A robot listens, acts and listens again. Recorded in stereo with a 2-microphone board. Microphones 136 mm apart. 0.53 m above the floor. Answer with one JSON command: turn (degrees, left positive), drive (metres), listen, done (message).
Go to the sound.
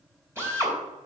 {"turn": -20}
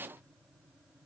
{"listen": true}
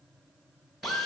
{"drive": 1.0}
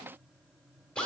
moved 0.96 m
{"turn": 10}
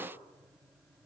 {"listen": true}
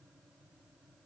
{"listen": true}
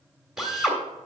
{"drive": 1.0}
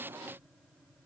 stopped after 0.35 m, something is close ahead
{"listen": true}
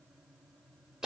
{"done": "Arrived at the drill, straight ahead."}